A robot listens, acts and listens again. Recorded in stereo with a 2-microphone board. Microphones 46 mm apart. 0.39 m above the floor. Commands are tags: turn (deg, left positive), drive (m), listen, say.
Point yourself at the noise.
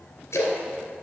<turn deg="90"/>
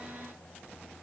<say>Facing where the splash came from. I can't hear it now.</say>